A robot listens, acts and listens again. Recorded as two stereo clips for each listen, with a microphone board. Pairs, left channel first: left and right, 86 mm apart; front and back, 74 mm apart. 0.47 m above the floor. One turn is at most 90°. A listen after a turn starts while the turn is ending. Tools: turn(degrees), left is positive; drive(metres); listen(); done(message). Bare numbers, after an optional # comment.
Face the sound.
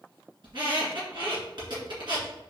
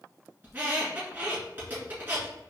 # The squeak: 115° right.
turn(-90)
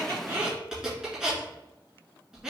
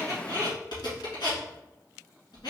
# The squeak is now 10° right.
turn(-10)
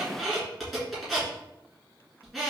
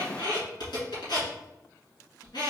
done("Facing the squeak, 1 to 2 m away.")